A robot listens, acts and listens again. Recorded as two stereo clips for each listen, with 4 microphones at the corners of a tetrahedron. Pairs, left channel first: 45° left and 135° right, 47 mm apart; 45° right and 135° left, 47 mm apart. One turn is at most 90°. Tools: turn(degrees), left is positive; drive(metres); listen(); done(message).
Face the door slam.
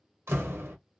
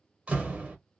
turn(degrees=-90)
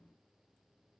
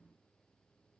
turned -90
turn(degrees=-70)
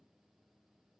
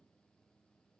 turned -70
done("Facing where the door slam came from. I can't hear it now.")